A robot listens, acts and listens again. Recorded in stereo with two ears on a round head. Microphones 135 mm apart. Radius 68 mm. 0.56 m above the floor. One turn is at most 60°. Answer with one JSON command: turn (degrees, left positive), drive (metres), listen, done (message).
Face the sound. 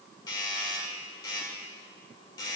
{"turn": 25}
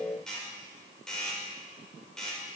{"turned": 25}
{"done": "Found it: a doorbell, straight ahead."}